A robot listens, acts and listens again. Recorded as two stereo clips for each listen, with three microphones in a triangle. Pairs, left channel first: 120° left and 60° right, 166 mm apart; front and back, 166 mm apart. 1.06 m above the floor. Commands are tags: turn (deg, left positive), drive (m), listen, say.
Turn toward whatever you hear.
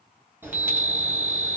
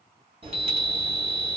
<turn deg="-140"/>
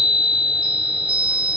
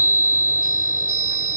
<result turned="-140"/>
<say>Found it: a chime, straight ahead.</say>